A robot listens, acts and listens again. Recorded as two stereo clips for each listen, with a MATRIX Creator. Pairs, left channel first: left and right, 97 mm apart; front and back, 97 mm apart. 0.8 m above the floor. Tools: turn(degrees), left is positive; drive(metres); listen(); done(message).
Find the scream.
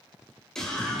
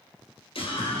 done("Found it: a scream, straight ahead, 2 to 4 m away.")